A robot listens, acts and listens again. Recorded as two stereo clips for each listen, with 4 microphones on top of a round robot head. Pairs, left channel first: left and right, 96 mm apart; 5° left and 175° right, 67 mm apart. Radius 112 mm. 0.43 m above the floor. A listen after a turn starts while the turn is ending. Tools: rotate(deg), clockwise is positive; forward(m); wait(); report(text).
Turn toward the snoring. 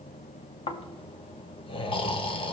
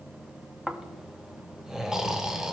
rotate(-100)
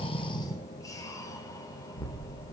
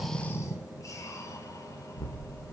rotate(-40)
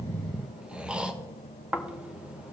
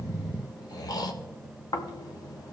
rotate(10)
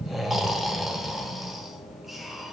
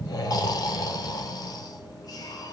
report("Facing the snoring, 1 to 2 m away.")